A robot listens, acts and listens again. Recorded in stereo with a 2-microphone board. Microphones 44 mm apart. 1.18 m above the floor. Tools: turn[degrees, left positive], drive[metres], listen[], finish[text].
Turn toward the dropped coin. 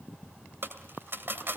Thought: The dropped coin: about 55° right or 125° right.
Action: turn[-55]
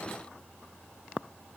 Action: listen[]
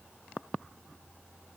Action: finish[I heard a dropped coin, but can't make it out now. It was about straight ahead or 70° right.]